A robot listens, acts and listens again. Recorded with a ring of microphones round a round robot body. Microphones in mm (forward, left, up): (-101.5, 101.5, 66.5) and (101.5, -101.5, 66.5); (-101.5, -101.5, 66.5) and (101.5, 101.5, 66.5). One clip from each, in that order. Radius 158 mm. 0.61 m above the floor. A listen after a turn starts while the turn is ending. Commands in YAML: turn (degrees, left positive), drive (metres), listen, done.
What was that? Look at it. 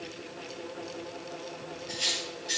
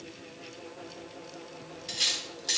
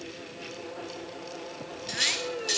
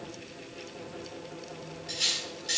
turn: -75
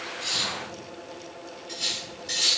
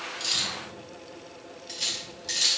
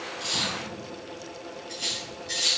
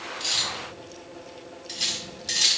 turn: 15
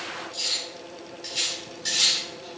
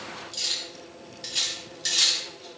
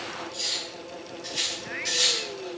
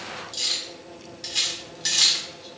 done: "Facing the cutlery clinking."